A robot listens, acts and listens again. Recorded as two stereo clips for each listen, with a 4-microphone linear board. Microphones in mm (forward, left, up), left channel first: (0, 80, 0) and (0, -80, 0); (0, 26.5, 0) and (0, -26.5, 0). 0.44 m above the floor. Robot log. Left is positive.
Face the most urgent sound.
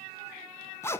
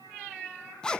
cmd idle
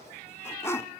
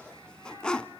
cmd idle
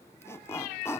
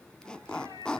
end: I can't make out anything urgent to turn to.